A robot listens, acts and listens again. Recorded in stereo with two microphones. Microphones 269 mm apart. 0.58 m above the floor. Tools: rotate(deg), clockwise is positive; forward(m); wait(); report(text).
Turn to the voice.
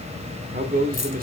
rotate(35)
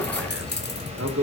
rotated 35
rotate(105)
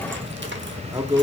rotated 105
rotate(15)
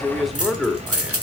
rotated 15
report("Found it: a man speaking, straight ahead, 1 to 2 m away.")